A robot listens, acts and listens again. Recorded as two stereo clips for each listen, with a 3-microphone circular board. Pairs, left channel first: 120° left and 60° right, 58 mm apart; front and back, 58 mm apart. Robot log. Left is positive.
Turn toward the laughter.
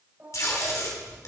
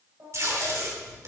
note: The laughter: 130° right.
cmd yaw -130
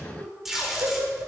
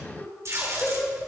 note: The laughter is now 55° right.
cmd yaw -55
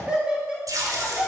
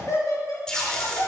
note: The laughter is now 15° left.
cmd yaw +15
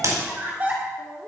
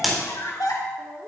end: Found it: laughter, straight ahead, over 4 m away.